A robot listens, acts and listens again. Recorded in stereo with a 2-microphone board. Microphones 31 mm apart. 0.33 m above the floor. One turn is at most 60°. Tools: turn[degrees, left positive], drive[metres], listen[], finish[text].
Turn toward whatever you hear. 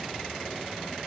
Action: listen[]
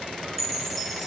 Action: turn[30]
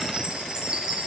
Thought: So it is at 25° right.
Action: turn[-25]
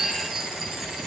Action: finish[Facing the chime, 1 to 2 m away.]